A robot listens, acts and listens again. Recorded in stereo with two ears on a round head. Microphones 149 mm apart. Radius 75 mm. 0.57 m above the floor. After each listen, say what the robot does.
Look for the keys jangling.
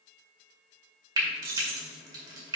Turn 60° right.
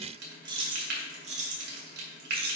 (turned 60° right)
Turn 65° right.
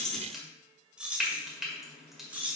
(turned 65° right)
Turn 10° right.
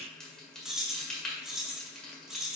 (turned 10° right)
Facing the keys jangling.